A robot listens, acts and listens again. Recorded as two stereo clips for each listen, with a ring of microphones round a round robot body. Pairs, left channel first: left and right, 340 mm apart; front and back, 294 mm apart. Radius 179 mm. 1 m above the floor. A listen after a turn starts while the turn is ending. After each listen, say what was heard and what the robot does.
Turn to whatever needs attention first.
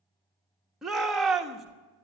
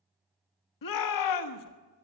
Found it: a shout, straight ahead.